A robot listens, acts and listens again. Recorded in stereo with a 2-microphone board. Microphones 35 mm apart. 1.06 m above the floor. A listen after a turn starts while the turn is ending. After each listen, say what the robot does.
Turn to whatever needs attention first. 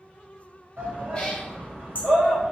Turn 75° right.
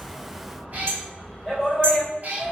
Turn 20° right.
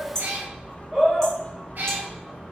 Found it: a shout, straight ahead, 2 to 4 m away.